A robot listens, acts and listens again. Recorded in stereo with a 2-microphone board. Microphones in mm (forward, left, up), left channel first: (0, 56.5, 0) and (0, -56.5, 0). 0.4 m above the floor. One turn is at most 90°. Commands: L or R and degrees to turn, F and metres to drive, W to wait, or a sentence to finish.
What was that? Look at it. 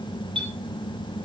R50
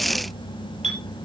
R80
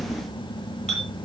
Facing the clink, over 4 m away.